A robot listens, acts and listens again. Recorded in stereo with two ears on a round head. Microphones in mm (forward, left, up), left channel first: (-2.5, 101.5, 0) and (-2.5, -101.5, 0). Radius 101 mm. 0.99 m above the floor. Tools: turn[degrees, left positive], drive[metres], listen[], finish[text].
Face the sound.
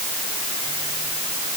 Action: listen[]
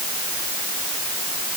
Action: listen[]
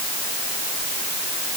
Action: finish[I can't make out anything.]